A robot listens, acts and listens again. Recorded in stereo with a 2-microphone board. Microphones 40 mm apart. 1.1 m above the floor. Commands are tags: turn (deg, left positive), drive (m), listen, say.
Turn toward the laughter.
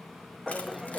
<turn deg="-30"/>
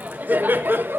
<turn deg="-120"/>
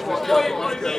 <turn deg="15"/>
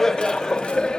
<turn deg="25"/>
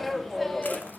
<turn deg="10"/>
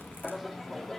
<turn deg="10"/>
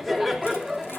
<say>Found it: laughter, straight ahead.</say>